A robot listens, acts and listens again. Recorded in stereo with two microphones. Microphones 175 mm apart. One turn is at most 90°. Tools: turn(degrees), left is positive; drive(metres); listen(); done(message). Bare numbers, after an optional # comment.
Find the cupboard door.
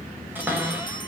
turn(-30)
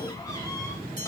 listen()
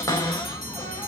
# So it is at 20° left.
turn(20)
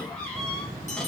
listen()
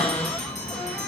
done("Found it: a cupboard door, straight ahead, over 4 m away.")